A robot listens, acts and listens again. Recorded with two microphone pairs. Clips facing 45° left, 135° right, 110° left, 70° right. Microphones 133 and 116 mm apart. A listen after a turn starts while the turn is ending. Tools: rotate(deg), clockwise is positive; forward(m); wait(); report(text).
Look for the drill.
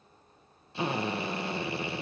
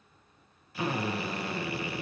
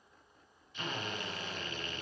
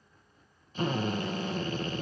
rotate(20)
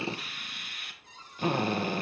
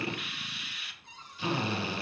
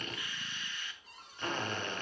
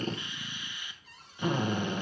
report("Found it: a drill, straight ahead, 1 to 2 m away.")